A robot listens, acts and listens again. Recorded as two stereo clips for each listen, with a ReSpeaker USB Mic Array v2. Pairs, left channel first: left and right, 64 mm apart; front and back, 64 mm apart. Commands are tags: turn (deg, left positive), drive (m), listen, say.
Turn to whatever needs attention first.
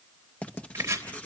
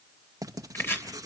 <listen/>
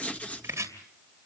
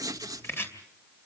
<listen/>
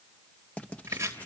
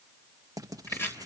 <say>I can't make out anything urgent to turn to.</say>